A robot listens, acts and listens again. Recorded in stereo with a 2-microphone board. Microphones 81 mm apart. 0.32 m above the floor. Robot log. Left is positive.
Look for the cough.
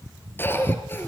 note: The cough: about 25° left or 155° left.
cmd yaw +25
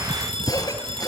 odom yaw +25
note: So it is at 130° left.
cmd yaw +130
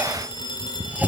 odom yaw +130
cmd idle
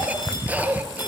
note: The cough is now 20° right.
cmd yaw -20
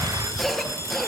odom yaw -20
end: Facing the cough.